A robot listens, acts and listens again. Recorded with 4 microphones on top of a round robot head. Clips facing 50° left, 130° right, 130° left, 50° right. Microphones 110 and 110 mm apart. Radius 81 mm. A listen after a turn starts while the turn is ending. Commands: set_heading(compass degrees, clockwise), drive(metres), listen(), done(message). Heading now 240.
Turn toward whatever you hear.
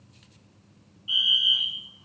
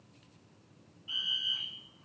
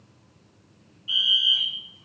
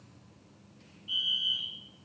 set_heading(115)
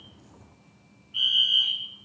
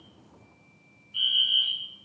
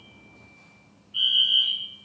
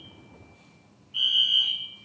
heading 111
done("Facing the fire alarm.")